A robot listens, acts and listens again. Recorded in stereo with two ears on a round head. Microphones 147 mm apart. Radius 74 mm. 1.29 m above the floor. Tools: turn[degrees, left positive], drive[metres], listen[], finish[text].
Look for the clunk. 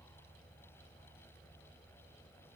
Action: listen[]
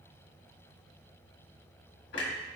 Thought: The clunk: about 75° left or 105° left.
Action: turn[75]
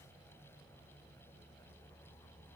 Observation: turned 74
Action: listen[]
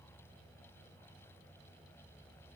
Action: finish[I heard a clunk, but can't make it out now. It was about straight ahead or 30° left.]